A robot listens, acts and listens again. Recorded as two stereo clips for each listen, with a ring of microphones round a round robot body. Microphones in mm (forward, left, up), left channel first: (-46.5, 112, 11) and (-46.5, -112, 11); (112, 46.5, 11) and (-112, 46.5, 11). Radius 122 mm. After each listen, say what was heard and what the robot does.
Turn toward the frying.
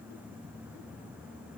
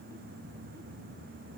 Keep listening.
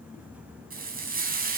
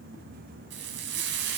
The frying: 135° right. Turn 135° right.
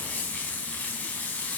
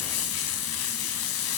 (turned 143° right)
Found it: frying, straight ahead, over 4 m away.